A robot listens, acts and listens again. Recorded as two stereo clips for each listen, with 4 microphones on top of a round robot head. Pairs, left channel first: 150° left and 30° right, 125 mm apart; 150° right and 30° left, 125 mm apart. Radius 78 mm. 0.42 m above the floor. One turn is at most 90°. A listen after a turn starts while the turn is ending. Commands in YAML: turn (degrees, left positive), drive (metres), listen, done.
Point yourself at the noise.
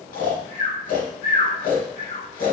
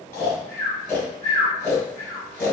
turn: 90
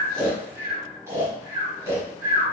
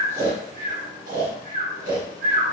turn: 40
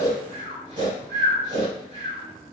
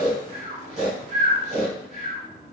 done: "Found it: snoring, straight ahead, 1 to 2 m away."